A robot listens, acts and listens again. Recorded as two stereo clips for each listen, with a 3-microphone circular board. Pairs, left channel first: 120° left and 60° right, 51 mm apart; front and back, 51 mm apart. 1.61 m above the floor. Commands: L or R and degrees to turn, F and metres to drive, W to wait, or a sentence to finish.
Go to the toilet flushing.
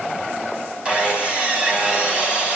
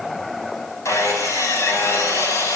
W
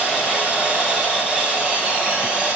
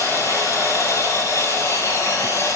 W
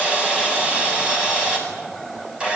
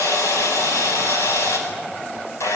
I can't make out a toilet flushing, only sawing.